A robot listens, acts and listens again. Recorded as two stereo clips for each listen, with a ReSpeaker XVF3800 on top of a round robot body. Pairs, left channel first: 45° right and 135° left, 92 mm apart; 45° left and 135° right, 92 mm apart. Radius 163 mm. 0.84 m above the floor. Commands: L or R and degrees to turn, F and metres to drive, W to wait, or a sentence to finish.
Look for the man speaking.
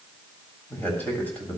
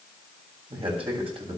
R120
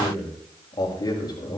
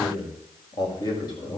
Found it: a man speaking, straight ahead, over 4 m away.